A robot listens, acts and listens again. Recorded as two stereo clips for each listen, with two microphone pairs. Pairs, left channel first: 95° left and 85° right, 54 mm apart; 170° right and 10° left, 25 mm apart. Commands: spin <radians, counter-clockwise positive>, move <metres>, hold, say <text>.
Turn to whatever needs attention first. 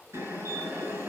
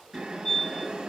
spin -1.83
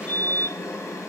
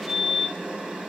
spin 0.35
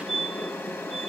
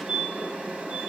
say Found it: a fire alarm, straight ahead, 2 to 4 m away.